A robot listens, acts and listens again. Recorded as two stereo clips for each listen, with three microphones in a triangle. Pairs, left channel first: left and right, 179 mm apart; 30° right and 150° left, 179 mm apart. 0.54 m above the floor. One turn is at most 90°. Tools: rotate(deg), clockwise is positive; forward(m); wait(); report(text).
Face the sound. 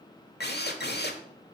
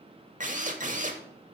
rotate(-90)
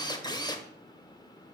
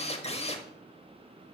rotate(-20)
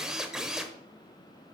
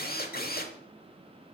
report("Facing the drill.")